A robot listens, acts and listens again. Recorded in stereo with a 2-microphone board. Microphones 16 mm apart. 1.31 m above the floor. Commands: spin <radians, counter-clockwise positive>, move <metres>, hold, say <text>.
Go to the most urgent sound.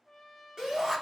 spin -0.79
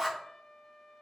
move 1.0
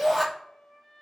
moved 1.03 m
spin -0.26
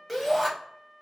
move 1.0
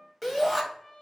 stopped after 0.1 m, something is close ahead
say I am next to the shout.